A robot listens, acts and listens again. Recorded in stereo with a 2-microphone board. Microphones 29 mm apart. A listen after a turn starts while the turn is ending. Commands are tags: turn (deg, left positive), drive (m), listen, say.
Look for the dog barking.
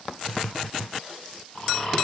<listen/>
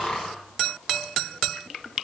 <listen/>
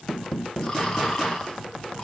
<say>I can't make out a dog barking, only snoring.</say>